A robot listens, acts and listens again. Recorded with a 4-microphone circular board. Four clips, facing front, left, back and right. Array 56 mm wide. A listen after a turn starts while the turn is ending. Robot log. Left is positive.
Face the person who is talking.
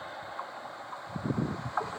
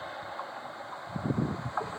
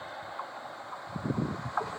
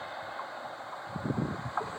cmd idle
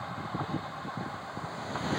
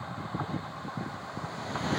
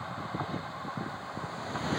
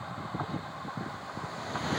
cmd idle
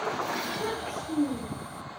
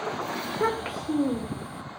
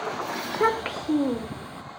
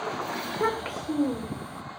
note: The child speaking: 175° left.
cmd yaw +175
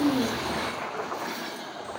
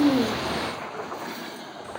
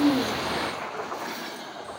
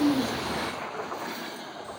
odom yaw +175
cmd idle
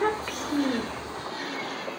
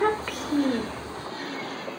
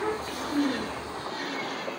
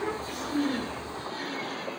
note: The child speaking is now 65° left.
cmd yaw +65
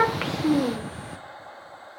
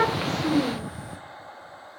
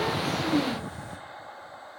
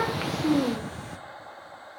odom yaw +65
note: The child speaking is now 25° right.
cmd yaw -25
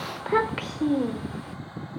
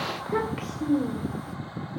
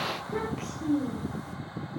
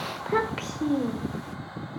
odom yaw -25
note: The child speaking is now 20° right.
cmd yaw -20
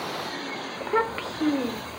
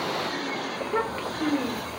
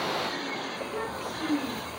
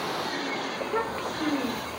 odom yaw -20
end: Facing the child speaking, 1 to 2 m away.